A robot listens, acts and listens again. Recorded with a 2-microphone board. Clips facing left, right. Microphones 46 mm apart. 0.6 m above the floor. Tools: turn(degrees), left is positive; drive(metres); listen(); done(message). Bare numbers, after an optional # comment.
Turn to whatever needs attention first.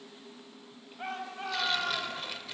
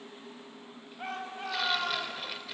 turn(30)
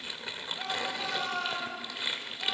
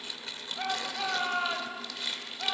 # So it is at 25° right.
turn(-25)
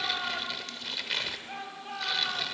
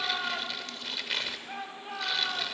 done("Facing the shout, 2 to 4 m away.")